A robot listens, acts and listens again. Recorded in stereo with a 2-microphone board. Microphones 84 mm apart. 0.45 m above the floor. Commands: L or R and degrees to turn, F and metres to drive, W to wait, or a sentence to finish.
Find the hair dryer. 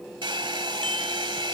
R90
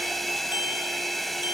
Found it: a hair dryer, straight ahead.